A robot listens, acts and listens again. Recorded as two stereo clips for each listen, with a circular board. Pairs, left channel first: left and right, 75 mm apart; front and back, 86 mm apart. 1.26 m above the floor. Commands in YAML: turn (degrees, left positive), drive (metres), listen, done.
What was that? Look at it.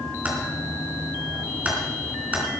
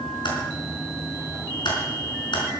turn: -20
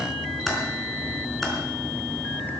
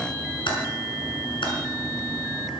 done: "Found it: typing on a keyboard, straight ahead."